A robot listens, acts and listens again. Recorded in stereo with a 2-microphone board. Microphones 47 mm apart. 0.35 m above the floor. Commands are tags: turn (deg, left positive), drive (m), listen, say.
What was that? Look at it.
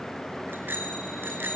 <turn deg="-45"/>
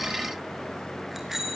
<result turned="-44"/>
<say>Found it: a bicycle bell, straight ahead.</say>